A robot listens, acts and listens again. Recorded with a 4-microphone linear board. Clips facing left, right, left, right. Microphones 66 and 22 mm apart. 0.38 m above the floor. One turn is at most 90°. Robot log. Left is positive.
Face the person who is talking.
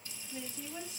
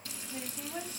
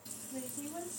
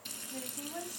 note: The woman speaking: about 40° right or 140° right.
cmd yaw -40
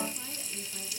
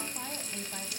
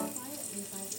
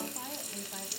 cmd idle
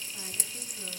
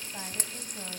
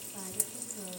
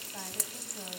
cmd idle
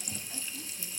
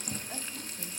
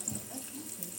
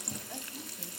end: I heard a woman speaking, but can't make it out now. It was about straight ahead or 100° right.